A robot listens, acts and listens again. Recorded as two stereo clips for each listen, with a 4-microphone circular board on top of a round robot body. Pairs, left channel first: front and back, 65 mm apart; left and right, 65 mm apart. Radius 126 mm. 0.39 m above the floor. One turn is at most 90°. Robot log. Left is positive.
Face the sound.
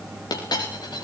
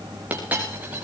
note: The dropped coin: 20° right.
cmd yaw -20
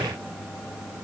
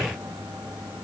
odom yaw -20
end: I heard a dropped coin from this way, but can't make it out now.